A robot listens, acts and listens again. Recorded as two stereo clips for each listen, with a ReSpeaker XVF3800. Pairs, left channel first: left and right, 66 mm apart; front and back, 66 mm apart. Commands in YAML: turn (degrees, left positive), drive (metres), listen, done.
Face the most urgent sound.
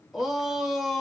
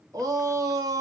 turn: -175
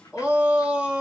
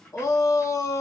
turn: -20
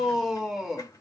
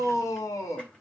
done: "Facing the shout, 1 to 2 m away."